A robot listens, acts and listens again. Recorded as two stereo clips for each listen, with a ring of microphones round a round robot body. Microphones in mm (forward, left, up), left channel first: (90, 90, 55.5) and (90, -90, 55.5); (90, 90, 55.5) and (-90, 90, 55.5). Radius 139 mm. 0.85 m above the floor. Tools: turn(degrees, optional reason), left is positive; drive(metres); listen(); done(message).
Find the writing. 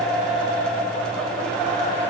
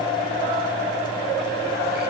listen()
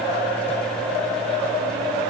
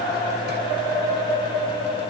listen()
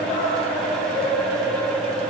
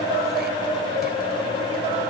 done("I can't make out writing to turn to.")